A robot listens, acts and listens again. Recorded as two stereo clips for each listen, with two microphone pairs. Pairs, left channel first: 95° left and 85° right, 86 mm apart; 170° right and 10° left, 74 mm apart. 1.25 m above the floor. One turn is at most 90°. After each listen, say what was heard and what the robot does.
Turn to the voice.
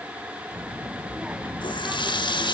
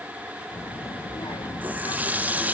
The child speaking: 170° right. Turn 90° right.
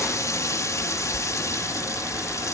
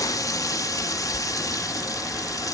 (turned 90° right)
The child speaking is now 95° right. Turn 90° right.
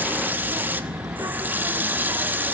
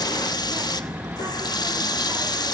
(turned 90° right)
The child speaking is now 35° right. Turn 35° right.
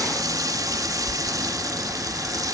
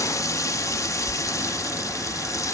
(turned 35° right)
The child speaking is now 10° right. Turn 10° right.
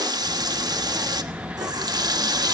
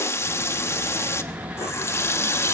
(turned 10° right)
Facing the child speaking.